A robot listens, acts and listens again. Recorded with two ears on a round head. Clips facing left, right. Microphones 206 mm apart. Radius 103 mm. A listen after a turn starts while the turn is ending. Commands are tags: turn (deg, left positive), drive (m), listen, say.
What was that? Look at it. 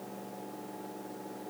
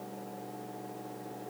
<listen/>
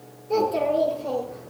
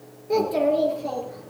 <turn deg="-90"/>
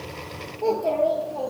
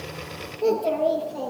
<turn deg="-10"/>
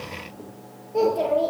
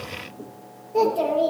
<say>Found it: a child speaking, straight ahead.</say>